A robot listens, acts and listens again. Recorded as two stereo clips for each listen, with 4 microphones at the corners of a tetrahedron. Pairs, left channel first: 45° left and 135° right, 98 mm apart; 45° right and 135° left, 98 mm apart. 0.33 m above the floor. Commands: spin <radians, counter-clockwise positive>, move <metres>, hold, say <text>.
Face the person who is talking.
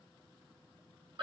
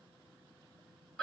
hold
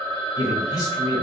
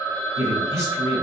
spin 1.48
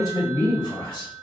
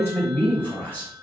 spin 0.35
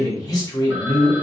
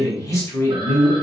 say Facing the man speaking.